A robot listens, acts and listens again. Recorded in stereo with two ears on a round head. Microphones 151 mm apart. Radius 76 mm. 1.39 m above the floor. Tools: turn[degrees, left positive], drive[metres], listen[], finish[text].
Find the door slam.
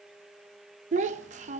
Action: listen[]
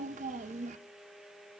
Action: listen[]
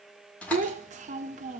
Action: turn[30]
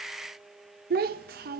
Action: listen[]
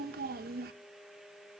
Action: finish[I heard a door slam, but can't make it out now. It was about 20° right or 140° left.]